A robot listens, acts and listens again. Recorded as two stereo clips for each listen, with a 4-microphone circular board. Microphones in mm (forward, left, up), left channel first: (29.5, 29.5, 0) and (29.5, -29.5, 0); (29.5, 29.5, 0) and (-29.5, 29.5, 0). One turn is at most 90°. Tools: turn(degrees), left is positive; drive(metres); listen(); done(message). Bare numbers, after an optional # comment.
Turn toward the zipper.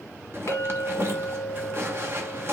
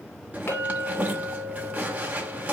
# The zipper: 125° right.
turn(-90)
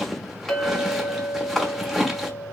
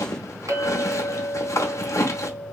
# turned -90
done("Facing the zipper, under 1 m away.")